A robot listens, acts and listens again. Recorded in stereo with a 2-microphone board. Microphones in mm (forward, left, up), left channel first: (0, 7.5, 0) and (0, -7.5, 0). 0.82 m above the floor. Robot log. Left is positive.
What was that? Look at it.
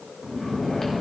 note: The snoring: about 30° left or 150° left.
cmd yaw +30
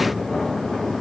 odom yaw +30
note: So it is at 125° left.
cmd yaw +125
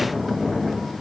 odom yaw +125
note: The snoring is now 25° left.
cmd yaw +25
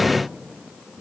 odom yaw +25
end: Facing the snoring, 2 to 4 m away.